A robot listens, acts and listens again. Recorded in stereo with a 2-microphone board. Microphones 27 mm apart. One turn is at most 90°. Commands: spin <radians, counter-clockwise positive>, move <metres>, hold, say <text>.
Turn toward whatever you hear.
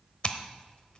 spin 0.70
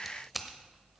say Facing the scissors, under 1 m away.